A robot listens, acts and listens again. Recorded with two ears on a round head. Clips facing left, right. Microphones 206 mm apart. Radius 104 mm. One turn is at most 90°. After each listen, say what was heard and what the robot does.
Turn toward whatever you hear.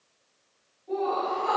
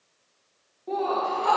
The laughter: about 70° right or 110° right. Turn 70° right.
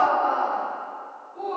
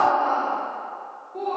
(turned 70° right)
So it is at 65° right. Turn 65° right.
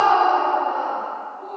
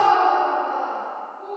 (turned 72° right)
The laughter is now 10° right. Turn 10° right.
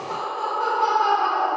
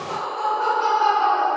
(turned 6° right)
Found it: laughter, straight ahead, 2 to 4 m away.